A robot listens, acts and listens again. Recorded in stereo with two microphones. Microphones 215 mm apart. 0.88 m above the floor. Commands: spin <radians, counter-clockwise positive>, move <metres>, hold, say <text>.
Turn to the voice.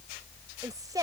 spin -0.26
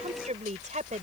spin -0.61
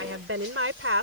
spin -1.83
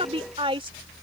spin -0.44
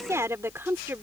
spin -0.17
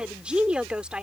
say Facing the woman speaking.